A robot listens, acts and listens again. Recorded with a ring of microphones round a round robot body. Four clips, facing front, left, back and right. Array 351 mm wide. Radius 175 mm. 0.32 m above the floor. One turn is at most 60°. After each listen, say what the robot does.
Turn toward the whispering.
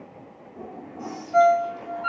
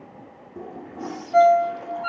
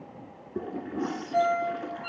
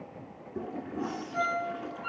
Turn 60° left.
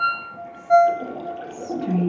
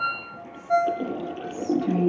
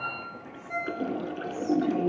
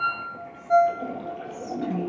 Turn 45° left.
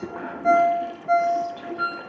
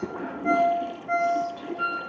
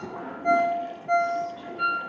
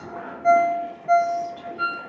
Facing the whispering.